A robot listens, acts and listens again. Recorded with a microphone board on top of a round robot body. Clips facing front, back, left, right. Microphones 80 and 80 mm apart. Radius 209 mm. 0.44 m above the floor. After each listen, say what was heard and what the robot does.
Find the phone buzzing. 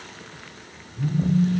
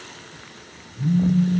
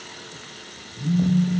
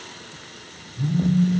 The phone buzzing: 55° right. Turn 55° right.
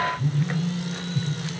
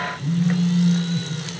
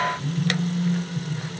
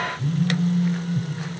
The phone buzzing is now 10° right. Turn 10° right.
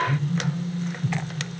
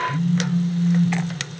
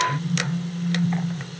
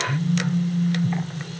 Found it: a phone buzzing, straight ahead.